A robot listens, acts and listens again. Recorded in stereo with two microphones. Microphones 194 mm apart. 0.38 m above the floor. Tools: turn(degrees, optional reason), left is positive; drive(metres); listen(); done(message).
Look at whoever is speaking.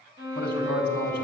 turn(degrees=60, reason="The man speaking: about 60° left or 120° left.")
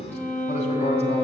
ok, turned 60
turn(degrees=40, reason="So it is at 40° left.")
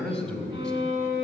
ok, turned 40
done("Found it: a man speaking, straight ahead.")